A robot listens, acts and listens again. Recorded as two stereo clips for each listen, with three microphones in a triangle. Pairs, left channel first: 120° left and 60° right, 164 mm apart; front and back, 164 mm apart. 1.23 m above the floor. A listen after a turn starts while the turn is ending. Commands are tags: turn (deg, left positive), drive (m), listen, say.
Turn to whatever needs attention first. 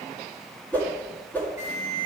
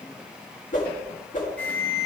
<turn deg="80"/>
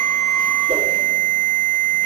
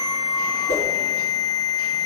<turn deg="25"/>
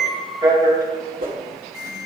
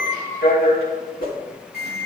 <turn deg="10"/>
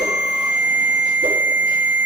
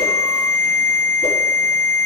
<say>Facing the alarm.</say>